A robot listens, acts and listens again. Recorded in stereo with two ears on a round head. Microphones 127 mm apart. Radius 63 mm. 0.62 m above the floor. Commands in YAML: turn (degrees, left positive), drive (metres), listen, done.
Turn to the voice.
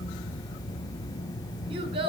turn: -40
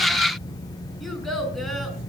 done: "Found it: a child speaking, straight ahead."